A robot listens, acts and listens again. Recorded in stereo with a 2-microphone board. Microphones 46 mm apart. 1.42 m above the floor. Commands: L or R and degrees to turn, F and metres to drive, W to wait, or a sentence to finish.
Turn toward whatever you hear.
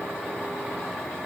W
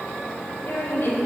L60
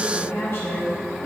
L65
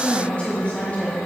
L30
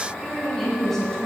L10
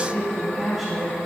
Facing the woman speaking.